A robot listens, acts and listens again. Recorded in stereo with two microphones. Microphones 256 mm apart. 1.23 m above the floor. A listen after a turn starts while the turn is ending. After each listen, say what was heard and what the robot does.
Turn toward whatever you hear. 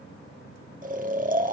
The snoring: about 30° right or 150° right. Turn 30° right.
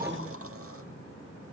Keep listening.
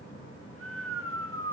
So it is at 120° right. Turn 120° right.
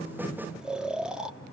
Facing the snoring.